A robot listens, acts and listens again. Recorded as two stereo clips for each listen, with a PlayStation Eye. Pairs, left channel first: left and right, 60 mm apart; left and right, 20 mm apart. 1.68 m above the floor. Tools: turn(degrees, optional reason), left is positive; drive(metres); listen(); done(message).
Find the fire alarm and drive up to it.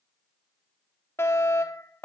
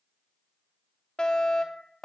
turn(degrees=45, reason="The fire alarm: about 45° left or 135° left.")
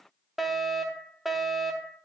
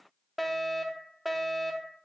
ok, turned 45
drive(metres=1.0)
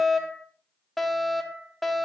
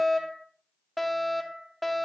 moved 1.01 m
drive(metres=1.0)
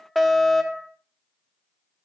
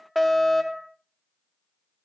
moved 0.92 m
drive(metres=1.0)
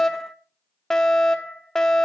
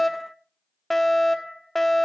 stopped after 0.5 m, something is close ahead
turn(degrees=10, reason="The fire alarm is now 10° left.")
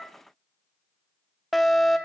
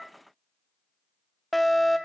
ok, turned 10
done("I am next to the fire alarm.")